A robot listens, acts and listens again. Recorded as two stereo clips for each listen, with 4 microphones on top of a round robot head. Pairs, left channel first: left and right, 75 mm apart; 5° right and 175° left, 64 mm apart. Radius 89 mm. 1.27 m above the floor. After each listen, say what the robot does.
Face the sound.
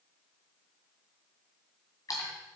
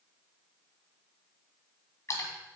Turn 35° left.
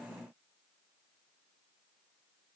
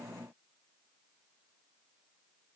Facing where the splash came from. I can't hear it now.